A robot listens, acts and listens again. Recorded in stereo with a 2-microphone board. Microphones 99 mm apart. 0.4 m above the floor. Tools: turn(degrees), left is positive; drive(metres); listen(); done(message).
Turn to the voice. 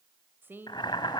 turn(degrees=-20)
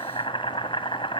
listen()
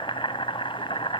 listen()
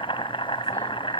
done("I heard a woman speaking, but can't make it out now. It was about straight ahead or 140° right.")